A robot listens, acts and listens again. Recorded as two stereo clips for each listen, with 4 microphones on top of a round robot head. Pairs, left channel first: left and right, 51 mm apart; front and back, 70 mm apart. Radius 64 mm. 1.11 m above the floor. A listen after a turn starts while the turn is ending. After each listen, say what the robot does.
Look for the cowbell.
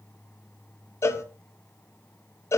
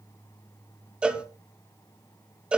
Turn 105° left.
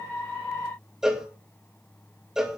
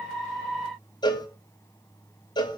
Turn 10° right.
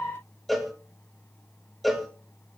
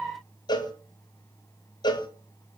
Facing the cowbell, 2 to 4 m away.